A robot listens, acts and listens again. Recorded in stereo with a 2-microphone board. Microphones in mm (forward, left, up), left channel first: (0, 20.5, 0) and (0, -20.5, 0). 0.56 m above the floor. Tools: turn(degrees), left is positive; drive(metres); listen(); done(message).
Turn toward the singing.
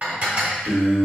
turn(degrees=-60)
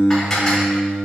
turn(degrees=-40)
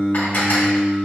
done("Facing the singing, 2 to 4 m away.")